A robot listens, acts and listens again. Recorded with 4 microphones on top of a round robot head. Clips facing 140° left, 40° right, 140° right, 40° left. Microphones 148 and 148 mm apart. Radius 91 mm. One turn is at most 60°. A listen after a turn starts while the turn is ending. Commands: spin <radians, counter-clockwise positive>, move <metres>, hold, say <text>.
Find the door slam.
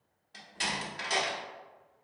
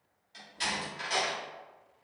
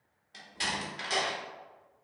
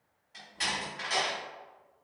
spin 1.05
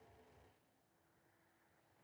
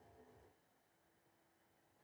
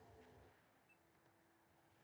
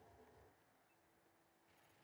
spin 1.05
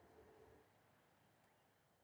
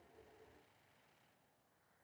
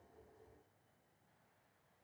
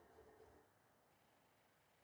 spin 0.79
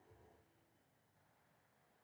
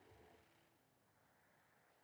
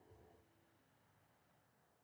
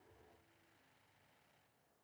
say Facing where the door slam came from. I can't hear it now.